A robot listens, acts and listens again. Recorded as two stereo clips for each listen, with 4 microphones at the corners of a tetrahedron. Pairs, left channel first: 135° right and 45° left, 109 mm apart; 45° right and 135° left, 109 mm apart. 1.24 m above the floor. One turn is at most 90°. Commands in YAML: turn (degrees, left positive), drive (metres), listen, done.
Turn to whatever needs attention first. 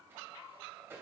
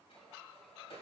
listen: true
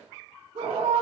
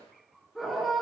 turn: 45
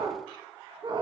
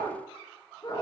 done: "Found it: a scream, straight ahead."